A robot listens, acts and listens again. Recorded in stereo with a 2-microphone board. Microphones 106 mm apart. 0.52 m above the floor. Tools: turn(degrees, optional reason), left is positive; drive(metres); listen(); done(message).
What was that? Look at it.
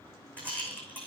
turn(degrees=30)
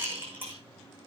turn(degrees=-20, reason="So it is at 20° right.")
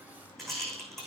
done("Facing the rattle.")